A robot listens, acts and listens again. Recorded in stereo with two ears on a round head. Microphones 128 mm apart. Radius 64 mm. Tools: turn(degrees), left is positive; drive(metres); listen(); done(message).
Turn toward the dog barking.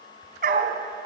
turn(degrees=-60)
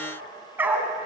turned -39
turn(degrees=-10)
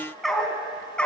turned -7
turn(degrees=10)
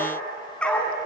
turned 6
turn(degrees=10)
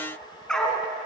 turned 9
done("Facing the dog barking.")